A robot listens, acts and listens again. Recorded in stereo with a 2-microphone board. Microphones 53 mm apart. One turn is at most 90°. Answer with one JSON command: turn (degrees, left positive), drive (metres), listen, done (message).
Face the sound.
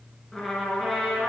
{"turn": 30}
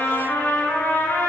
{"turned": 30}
{"turn": 90}
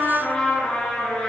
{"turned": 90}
{"turn": 15}
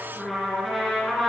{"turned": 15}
{"done": "Found it: a trumpet, straight ahead."}